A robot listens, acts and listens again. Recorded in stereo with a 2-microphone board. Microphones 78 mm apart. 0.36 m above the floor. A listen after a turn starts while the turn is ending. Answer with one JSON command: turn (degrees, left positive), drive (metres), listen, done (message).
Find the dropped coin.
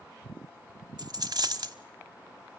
{"turn": -60}
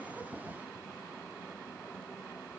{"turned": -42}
{"listen": true}
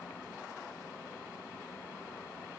{"done": "I heard a dropped coin, but can't make it out now. It was about 15° right or 80° right."}